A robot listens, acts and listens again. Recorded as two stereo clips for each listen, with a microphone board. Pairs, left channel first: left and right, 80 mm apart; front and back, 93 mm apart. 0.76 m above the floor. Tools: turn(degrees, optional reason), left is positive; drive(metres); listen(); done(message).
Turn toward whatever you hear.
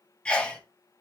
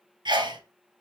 turn(degrees=165, reason="The sneeze: 165° left.")
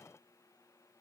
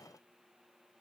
done("I heard a sneeze from this way, but can't make it out now.")